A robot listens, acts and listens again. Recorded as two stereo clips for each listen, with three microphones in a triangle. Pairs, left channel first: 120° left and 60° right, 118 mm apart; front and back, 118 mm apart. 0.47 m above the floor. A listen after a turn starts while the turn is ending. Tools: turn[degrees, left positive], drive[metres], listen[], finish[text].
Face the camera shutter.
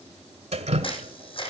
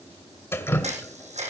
Thought: The camera shutter: 160° left.
Action: turn[160]
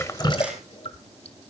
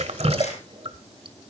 Action: listen[]
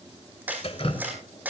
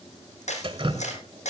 Thought: The camera shutter is now 15° left.
Action: turn[15]
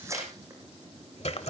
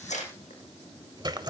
Action: finish[Facing the camera shutter, over 4 m away.]